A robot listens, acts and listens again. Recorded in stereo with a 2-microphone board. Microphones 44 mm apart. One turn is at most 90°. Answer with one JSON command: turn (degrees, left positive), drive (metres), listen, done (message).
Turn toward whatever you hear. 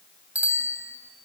{"turn": -40}
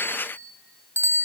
{"turn": -90}
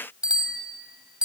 {"turn": -20}
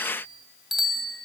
{"done": "Found it: a bicycle bell, straight ahead."}